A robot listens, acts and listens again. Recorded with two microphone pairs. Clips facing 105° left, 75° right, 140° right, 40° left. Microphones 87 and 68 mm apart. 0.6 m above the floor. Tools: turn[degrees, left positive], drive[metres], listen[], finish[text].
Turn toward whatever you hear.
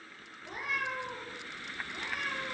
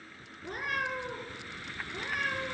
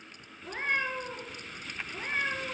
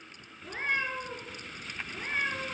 Thought: The cat meowing: 50° right.
Action: turn[-50]
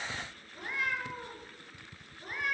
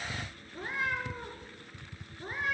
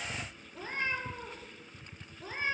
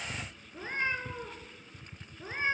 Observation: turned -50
Thought: The cat meowing is now 20° right.
Action: turn[-20]
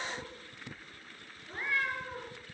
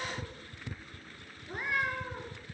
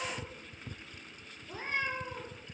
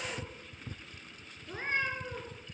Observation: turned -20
Action: finish[Found it: a cat meowing, straight ahead, 1 to 2 m away.]